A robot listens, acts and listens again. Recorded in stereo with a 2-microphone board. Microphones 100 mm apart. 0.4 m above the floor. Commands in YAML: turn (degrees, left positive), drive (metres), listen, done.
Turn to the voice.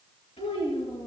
turn: 90
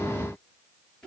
turn: 10
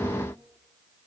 listen: true
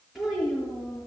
done: "Found it: a child speaking, straight ahead."